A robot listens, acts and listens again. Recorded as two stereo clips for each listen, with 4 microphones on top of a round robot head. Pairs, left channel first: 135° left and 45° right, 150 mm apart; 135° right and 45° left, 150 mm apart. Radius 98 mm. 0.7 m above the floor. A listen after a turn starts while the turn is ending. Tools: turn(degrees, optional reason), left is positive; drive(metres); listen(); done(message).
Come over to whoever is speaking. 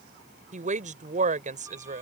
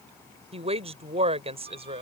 drive(metres=1.0)
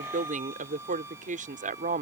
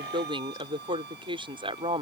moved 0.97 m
turn(degrees=-10, reason="The woman speaking is now 10° right.")
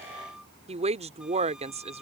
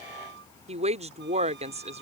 drive(metres=1.0)
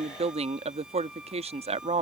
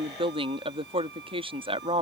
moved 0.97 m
drive(metres=1.0)
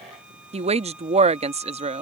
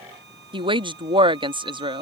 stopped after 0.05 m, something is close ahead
done("Arrived at the woman speaking, straight ahead.")